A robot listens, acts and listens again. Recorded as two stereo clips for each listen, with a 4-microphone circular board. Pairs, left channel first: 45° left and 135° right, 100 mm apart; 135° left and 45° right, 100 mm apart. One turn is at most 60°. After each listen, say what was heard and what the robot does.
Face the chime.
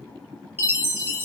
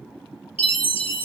The chime: 160° left. Turn 60° left.
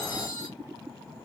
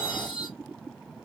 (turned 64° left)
The chime is now 95° left. Turn 60° left.
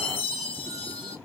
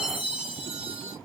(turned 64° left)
The chime is now 35° left. Turn 35° left.
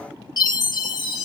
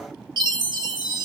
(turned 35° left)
Found it: a chime, straight ahead.